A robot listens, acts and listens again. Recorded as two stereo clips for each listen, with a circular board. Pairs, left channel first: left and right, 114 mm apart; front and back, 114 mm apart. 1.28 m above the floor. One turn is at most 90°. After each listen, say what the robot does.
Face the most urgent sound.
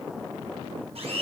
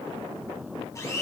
Keep listening.
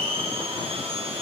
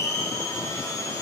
Keep listening.
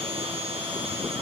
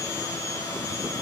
I can't make out anything urgent, only a blender.